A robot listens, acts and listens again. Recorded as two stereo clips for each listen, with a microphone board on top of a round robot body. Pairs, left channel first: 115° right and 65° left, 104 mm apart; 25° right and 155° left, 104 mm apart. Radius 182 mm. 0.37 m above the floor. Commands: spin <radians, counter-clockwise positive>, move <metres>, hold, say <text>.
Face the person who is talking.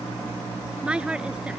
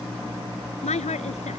spin -0.26
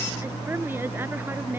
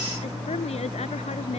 hold
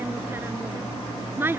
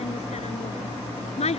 say Found it: a woman speaking, straight ahead.